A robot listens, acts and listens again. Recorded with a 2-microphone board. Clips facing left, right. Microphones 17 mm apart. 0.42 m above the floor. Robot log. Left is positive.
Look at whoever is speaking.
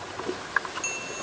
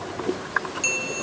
cmd idle
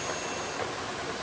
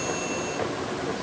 cmd idle
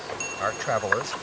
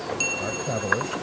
note: The man speaking: about 60° left or 120° left.
cmd yaw +60
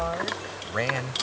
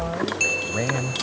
note: So it is at 30° left.
cmd yaw +30
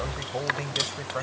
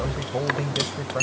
note: The man speaking is now 10° left.
cmd yaw +10
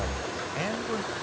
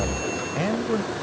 end: Found it: a man speaking, straight ahead.